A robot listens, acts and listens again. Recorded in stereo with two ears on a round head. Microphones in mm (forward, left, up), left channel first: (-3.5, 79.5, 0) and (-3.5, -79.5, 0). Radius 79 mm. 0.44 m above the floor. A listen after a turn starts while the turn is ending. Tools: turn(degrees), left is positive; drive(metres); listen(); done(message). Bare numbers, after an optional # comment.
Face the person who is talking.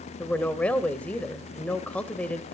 turn(30)
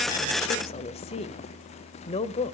# So it is at 140° left.
turn(140)
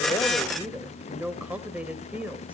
# The woman speaking is now 10° right.
turn(-10)
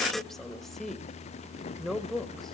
done("Found it: a woman speaking, straight ahead.")